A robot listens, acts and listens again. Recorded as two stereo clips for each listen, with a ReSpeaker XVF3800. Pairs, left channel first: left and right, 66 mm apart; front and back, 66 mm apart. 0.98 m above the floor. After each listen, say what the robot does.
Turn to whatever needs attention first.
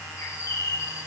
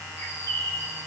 Keep listening.
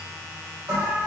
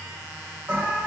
Turn 120° right.
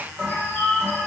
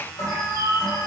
Turn 20° right.
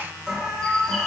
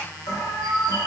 Facing the alarm, 2 to 4 m away.